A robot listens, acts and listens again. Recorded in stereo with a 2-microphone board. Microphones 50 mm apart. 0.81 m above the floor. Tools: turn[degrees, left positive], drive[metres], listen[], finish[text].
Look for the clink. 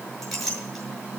Action: turn[30]
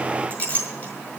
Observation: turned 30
Thought: So it is at 155° left.
Action: turn[155]
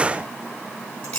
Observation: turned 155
Thought: The clink is now 25° left.
Action: turn[25]
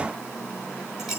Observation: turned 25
Thought: The clink is now 10° right.
Action: turn[-10]
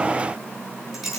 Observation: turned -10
Action: finish[Found it: a clink, straight ahead.]